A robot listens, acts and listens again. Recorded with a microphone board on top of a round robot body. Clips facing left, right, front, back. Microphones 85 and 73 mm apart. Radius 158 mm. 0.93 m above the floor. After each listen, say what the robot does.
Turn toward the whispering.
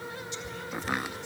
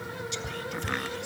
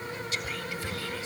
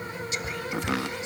Turn 110° right.
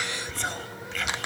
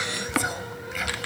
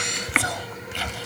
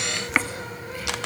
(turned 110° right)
Turn 10° right.
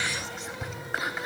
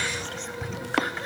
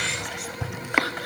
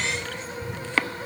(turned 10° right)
Found it: whispering, straight ahead.